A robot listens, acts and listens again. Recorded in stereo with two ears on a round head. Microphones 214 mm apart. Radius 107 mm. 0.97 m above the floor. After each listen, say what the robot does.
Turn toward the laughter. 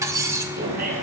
Turn 40° right.
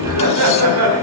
Turn 110° right.
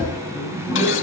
Turn 10° right.
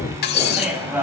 Facing the laughter.